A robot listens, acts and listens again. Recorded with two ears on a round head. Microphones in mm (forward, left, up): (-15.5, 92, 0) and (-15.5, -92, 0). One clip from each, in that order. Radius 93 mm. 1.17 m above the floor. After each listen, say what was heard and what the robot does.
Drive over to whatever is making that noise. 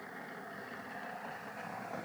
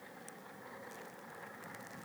Keep listening.
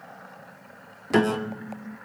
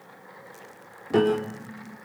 The piano: about 50° left or 130° left. Turn 50° left.
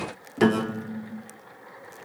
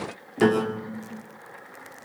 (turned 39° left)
So it is at 10° left. Turn 10° left.
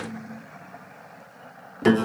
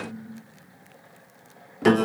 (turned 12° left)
Drive 1.0 m forward.
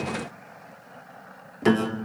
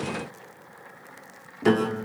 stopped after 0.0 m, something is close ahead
The piano is now 10° left. Turn 10° left.
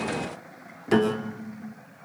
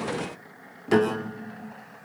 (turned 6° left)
Something is in my way. I am facing the piano but have not reached it.